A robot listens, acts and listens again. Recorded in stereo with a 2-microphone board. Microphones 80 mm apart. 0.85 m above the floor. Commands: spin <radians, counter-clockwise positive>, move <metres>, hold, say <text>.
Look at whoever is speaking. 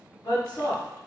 spin 1.05
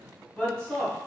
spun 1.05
spin 0.17
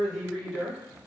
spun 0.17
say Found it: a woman speaking, straight ahead.